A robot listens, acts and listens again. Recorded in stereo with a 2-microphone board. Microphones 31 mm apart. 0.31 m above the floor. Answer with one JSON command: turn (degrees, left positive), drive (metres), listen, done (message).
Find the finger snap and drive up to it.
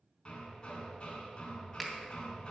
{"turn": -30}
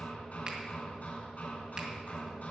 {"listen": true}
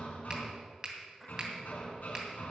{"turn": -145}
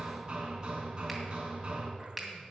{"drive": 1.0}
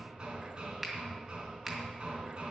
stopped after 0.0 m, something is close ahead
{"done": "Something is in my way. I am facing the finger snap but have not reached it."}